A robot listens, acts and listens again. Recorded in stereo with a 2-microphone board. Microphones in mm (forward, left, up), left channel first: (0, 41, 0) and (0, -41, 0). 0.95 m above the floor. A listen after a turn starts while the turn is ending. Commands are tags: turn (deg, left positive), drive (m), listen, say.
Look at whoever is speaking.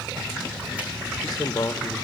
<turn deg="50"/>
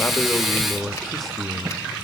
<say>Found it: a man speaking, straight ahead, 1 to 2 m away.</say>